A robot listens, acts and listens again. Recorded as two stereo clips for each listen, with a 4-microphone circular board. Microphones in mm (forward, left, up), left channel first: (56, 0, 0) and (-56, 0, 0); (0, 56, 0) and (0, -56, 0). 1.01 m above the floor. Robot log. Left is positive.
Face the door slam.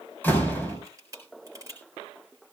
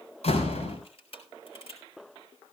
note: The door slam: 75° left.
cmd yaw +75
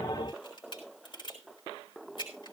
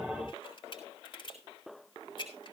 end: I heard a door slam from this way, but can't make it out now.